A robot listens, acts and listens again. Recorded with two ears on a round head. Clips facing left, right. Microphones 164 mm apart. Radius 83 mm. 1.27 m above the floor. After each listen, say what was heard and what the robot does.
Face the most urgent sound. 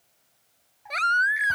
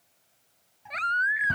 The baby crying: about 50° left or 130° left. Turn 50° left.
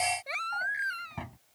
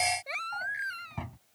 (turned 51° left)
Facing the baby crying.